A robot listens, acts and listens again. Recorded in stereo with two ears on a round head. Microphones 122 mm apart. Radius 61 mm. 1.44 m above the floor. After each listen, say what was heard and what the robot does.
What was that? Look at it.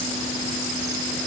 Keep listening.
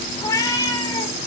The cat meowing: about 25° left or 155° left. Turn 25° left.
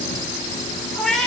Facing the cat meowing.